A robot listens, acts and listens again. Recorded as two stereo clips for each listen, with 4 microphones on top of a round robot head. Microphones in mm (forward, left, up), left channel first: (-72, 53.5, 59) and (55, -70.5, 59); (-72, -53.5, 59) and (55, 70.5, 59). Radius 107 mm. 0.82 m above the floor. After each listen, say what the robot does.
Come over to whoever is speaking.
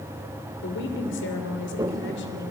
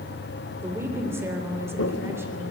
Turn 120° left.
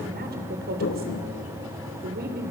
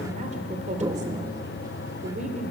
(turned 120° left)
Turn 10° right.
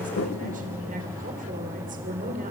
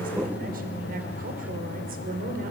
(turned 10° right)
Drive 1.0 m forward.
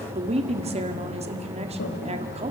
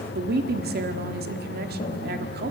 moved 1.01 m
Turn 10° left.
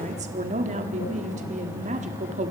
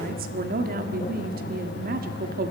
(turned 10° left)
Drive 1.0 m forward.
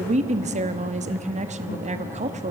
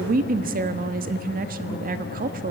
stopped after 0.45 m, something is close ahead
I am next to the woman speaking.